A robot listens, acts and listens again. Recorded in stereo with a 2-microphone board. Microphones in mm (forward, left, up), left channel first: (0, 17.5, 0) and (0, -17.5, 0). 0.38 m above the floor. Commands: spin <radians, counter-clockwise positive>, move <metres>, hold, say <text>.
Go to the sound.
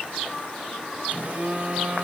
spin -0.70
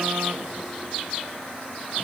hold
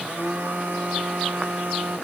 spin -1.66
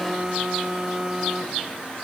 spin -0.35
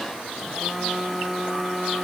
move 1.0
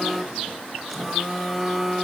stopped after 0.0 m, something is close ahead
say Blocked. The phone buzzing is further on, straight ahead.